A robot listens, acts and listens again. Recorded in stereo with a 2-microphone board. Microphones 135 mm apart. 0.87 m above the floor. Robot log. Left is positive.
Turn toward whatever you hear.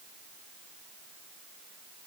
cmd idle
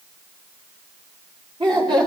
note: The laughter: about 35° right or 145° right.
cmd yaw -35
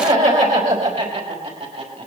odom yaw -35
note: So it is at 120° right.
cmd yaw -120
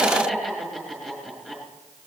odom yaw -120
end: Found it: laughter, straight ahead.